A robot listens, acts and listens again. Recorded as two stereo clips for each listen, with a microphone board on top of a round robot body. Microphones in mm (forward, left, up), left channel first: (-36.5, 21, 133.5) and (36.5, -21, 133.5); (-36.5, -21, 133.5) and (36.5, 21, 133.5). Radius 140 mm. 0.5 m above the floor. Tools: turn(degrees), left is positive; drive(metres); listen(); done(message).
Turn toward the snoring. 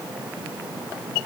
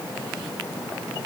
listen()
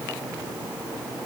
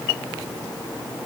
listen()
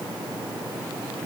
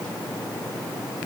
done("I can't make out snoring to turn to.")